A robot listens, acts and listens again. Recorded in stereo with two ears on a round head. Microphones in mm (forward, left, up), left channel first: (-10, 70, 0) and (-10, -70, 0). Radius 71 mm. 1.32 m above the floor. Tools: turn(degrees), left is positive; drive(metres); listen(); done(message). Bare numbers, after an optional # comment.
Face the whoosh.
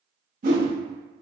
# The whoosh: about 50° right or 130° right.
turn(-50)
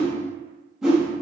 done("Found it: a whoosh, straight ahead.")